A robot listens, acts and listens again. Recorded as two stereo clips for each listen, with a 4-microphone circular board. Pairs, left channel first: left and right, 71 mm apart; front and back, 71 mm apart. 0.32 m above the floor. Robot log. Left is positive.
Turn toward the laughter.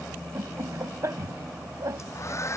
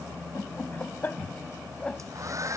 note: The laughter: 70° right.
cmd yaw -70
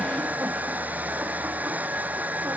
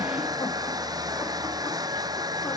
cmd idle
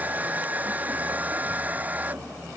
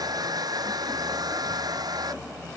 cmd idle
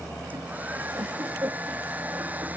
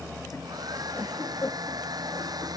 note: The laughter is now 45° right.
cmd yaw -45
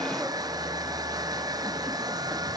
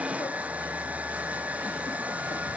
cmd idle
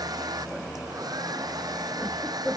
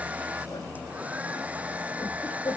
end: Found it: laughter, straight ahead.